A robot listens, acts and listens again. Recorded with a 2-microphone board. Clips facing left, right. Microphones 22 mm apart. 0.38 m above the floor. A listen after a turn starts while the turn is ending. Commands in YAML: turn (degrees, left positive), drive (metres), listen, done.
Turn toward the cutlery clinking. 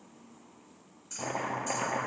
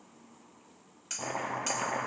turn: -70
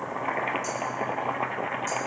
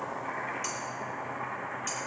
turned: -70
listen: true
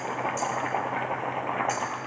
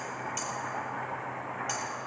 listen: true
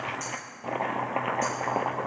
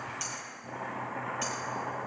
done: "I heard cutlery clinking, but can't make it out now. It was about straight ahead or 40° right."